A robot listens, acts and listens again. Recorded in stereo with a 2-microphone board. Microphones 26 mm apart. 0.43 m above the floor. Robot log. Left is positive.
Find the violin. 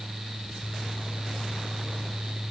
cmd idle
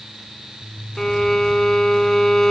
note: The violin: about 20° left or 160° left.
cmd yaw +20
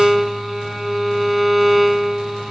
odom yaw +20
end: Found it: a violin, straight ahead.